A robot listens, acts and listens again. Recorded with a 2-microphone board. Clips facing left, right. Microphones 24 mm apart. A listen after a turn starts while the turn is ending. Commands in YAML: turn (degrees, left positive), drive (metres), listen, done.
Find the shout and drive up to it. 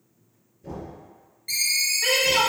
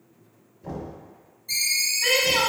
turn: 30
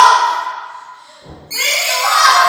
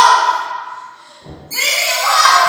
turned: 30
turn: -15
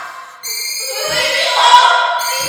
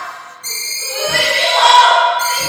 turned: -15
drive: 1.0
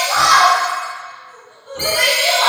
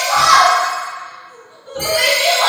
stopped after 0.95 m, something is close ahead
done: "Arrived at the shout, straight ahead."